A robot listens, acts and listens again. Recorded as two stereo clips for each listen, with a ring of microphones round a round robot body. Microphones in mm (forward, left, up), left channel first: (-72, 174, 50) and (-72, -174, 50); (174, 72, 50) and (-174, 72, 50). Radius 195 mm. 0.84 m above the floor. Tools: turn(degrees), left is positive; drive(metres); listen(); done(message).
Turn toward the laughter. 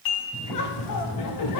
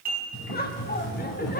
turn(degrees=60)
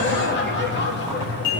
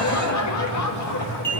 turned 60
turn(degrees=30)
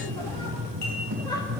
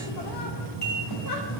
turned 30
turn(degrees=10)
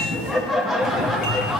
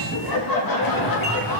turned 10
done("Facing the laughter.")